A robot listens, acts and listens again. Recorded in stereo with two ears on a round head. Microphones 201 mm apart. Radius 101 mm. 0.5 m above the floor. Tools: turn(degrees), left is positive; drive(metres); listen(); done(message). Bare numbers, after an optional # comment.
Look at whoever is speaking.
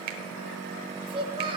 # The child speaking: about 25° right or 155° right.
turn(-25)
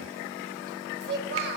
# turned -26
# So it is at 130° right.
turn(-130)
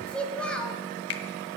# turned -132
done("Found it: a child speaking, straight ahead, 1 to 2 m away.")